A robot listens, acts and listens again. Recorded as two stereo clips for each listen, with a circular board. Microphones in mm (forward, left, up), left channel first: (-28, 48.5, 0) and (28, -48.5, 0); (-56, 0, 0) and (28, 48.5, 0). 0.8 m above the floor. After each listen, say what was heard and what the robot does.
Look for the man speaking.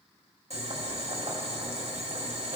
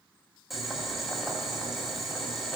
Keep listening.
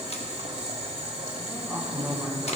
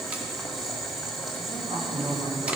The man speaking: 25° left. Turn 25° left.
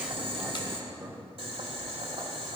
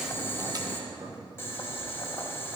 Facing the man speaking, 2 to 4 m away.